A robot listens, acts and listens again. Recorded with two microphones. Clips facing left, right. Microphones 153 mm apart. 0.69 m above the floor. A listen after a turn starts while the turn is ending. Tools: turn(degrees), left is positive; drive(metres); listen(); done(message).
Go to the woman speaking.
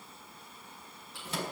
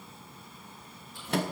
listen()
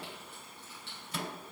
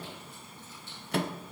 listen()
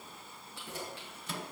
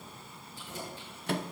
done("I can't make out a woman speaking, only a microwave and keys jangling.")